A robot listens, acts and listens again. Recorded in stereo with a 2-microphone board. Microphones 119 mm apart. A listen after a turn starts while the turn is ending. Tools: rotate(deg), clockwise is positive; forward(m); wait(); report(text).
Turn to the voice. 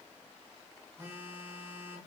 wait()
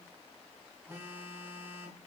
wait()
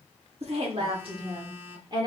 rotate(40)
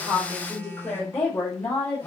rotate(-15)
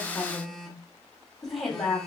report("Facing the woman speaking.")